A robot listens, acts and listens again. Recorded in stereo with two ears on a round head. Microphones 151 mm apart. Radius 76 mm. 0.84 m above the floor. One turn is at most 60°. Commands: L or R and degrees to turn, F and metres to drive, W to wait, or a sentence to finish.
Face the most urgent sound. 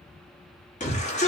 L45
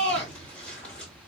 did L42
L10
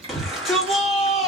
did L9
Found it: a shout, straight ahead.